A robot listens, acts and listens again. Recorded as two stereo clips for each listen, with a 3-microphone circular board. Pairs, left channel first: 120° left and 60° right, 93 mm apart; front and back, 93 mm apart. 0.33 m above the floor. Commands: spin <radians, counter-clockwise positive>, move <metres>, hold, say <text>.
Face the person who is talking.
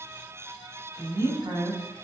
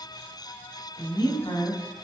spin -0.44
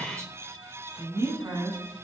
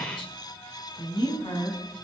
say Facing the woman speaking, 2 to 4 m away.